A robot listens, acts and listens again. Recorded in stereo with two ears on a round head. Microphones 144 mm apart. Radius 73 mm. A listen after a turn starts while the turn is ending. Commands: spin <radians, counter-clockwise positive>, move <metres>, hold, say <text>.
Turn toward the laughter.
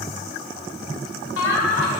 spin 1.57
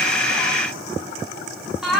say Found it: laughter, straight ahead.